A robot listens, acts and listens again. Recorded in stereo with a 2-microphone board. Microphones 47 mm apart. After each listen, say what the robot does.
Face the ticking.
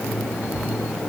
Keep listening.
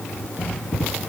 Keep listening.
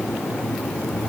I can't make out ticking.